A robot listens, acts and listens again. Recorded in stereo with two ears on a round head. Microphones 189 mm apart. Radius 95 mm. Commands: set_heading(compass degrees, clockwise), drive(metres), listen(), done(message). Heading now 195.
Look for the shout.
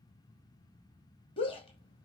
set_heading(170)
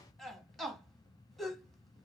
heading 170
done("Facing the shout, 2 to 4 m away.")